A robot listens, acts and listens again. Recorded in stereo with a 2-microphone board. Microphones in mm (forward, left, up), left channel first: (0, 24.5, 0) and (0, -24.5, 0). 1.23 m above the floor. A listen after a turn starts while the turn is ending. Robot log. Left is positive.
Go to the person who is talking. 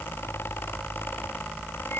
cmd idle
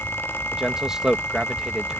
cmd yaw -30
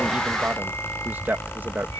note: So it is at 135° right.
cmd yaw -135
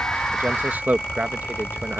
note: The man speaking is now 40° right.
cmd yaw -40
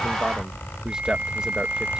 cmd idle
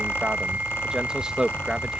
note: The man speaking is now 15° right.
cmd yaw -15
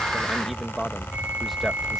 cmd fwd 1.0
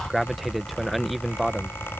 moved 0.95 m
cmd fwd 1.0
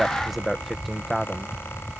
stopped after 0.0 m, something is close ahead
end: Arrived at the man speaking, straight ahead.